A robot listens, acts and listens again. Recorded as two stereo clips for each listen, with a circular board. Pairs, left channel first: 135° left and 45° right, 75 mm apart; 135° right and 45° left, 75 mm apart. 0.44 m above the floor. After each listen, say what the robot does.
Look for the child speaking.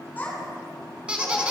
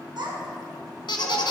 Turn 65° left.
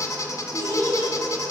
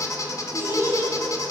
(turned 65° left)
Turn 10° right.
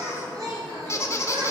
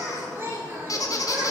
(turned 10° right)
Turn 15° right.
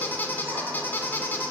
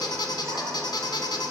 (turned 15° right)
Keep listening.
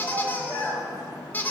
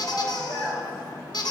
Turn 10° right.
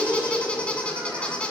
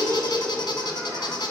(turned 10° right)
Facing the child speaking.